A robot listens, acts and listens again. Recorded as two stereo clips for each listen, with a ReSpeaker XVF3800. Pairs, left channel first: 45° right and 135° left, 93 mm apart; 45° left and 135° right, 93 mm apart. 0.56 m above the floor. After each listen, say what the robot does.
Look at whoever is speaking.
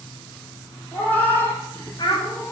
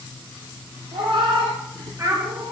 Turn 80° right.
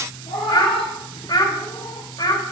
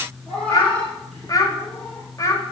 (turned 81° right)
Facing the child speaking.